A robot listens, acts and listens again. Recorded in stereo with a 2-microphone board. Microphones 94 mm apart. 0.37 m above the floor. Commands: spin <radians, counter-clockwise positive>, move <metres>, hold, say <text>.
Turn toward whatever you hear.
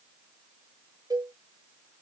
spin -0.79
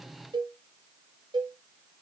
spin -1.40
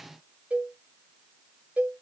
spin -0.26
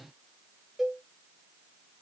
say Found it: a cowbell, straight ahead.